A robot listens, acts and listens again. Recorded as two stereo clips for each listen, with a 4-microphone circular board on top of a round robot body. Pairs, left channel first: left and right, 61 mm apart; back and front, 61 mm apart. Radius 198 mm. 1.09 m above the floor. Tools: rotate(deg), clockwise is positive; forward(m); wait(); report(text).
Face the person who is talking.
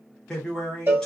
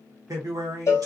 rotate(-15)
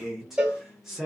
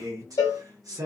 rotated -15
report("Facing the man speaking.")